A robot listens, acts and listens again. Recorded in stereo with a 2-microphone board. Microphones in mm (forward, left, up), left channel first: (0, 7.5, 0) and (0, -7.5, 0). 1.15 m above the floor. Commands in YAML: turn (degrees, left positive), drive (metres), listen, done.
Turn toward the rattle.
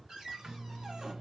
listen: true
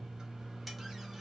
turn: -30
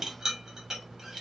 turn: -145
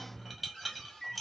done: "Found it: a rattle, straight ahead."